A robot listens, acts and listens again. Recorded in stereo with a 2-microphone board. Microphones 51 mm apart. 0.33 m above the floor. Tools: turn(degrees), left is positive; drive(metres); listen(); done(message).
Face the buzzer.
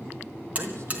turn(degrees=-30)
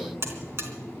turn(degrees=-120)
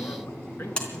turn(degrees=20)
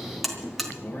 done("Found it: a buzzer, straight ahead, 2 to 4 m away.")